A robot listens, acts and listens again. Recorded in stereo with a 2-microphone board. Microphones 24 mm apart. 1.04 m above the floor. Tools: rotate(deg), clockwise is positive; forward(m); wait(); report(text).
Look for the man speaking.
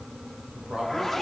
rotate(55)
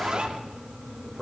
rotate(10)
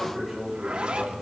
report("Found it: a man speaking, straight ahead, over 4 m away.")